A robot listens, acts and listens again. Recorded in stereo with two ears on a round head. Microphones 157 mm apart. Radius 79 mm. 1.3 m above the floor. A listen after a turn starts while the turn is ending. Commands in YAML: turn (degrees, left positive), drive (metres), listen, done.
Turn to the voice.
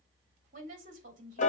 turn: -45
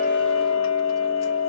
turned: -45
listen: true
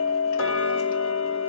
listen: true
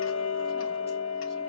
done: "I heard a woman speaking, but can't make it out now. It was about straight ahead or 90° right."